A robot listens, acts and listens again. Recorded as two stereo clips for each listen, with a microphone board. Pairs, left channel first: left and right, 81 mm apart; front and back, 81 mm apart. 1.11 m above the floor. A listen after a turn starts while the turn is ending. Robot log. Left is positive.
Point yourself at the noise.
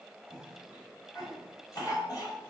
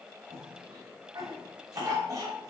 note: The cough: 135° left.
cmd yaw +135
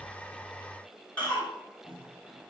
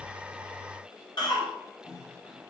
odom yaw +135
note: The cough is now 20° left.
cmd yaw +20
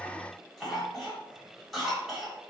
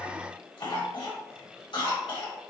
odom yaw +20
end: Facing the cough.